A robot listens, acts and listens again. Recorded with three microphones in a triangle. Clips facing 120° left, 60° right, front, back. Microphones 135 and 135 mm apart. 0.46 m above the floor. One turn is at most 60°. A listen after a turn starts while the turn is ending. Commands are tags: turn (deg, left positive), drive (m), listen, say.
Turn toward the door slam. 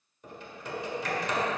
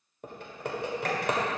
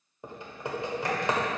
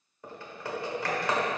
<listen/>
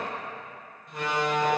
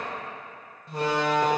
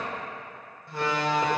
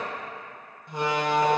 <turn deg="-60"/>
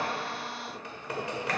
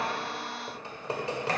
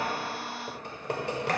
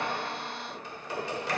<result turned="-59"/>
<turn deg="-50"/>
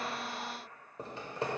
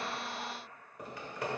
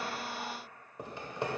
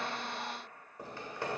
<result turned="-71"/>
<turn deg="20"/>
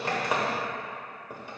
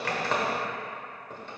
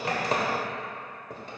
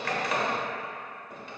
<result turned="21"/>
<say>I heard a door slam from this way, but can't make it out now.</say>